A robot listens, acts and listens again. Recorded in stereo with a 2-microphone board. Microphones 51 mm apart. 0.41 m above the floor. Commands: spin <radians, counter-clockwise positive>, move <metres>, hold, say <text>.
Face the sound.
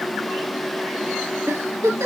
spin -1.13
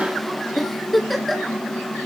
say Facing the giggle.